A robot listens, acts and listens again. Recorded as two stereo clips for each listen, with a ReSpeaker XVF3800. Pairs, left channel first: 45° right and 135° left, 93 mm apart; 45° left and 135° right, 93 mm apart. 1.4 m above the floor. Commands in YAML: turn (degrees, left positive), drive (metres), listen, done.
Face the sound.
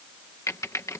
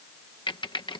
turn: 15
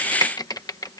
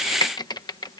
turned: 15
done: "Facing the typing on a keyboard."